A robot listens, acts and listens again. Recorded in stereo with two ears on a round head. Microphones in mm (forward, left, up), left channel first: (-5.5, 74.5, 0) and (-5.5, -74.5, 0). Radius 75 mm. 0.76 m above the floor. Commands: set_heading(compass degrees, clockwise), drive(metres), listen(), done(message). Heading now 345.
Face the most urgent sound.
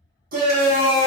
set_heading(40)
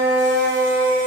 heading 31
set_heading(96)
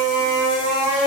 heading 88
done("Facing the shout.")